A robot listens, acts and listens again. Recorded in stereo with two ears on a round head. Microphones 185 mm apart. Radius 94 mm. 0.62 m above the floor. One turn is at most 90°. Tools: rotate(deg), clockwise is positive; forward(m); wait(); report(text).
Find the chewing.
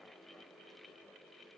wait()
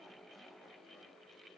wait()
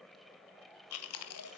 rotate(-90)
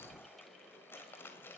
rotate(-10)
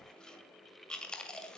report("Found it: chewing, straight ahead, 1 to 2 m away.")